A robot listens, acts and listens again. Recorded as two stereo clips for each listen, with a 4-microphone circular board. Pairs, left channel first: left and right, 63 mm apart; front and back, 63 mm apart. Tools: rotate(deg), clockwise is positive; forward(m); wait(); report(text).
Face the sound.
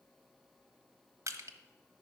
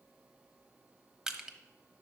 rotate(100)
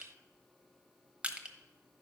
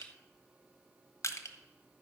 rotate(20)
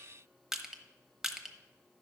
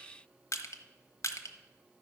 report("Found it: crushing, straight ahead, under 1 m away.")